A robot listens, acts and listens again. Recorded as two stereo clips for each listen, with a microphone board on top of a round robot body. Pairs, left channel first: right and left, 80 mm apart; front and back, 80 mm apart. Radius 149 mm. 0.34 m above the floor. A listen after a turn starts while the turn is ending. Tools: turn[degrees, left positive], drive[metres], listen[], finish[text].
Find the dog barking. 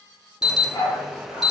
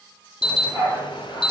Thought: The dog barking: 135° right.
Action: turn[-135]
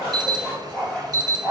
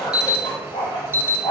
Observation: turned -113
Thought: The dog barking is now 20° right.
Action: turn[-20]
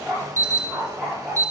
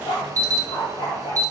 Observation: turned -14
Action: finish[Found it: a dog barking, straight ahead, over 4 m away.]